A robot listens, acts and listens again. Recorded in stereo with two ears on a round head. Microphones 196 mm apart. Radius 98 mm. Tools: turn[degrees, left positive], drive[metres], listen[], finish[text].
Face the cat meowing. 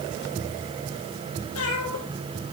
Thought: The cat meowing: about 70° left or 110° left.
Action: turn[70]
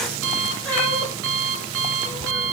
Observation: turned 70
Action: listen[]
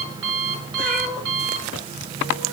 Action: finish[Facing the cat meowing, over 4 m away.]